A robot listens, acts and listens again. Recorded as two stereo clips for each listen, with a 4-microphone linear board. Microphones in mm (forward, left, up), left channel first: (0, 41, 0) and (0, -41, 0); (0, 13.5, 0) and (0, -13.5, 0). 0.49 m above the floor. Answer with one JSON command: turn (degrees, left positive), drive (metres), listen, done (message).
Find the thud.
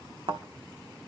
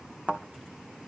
{"turn": -90}
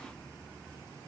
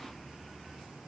{"done": "I heard a thud from this way, but can't make it out now."}